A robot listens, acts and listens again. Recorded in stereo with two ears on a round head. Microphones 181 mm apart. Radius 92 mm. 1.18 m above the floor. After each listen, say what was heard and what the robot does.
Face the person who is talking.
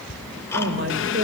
The man speaking: about 60° right or 120° right. Turn 60° right.
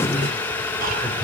Facing the man speaking.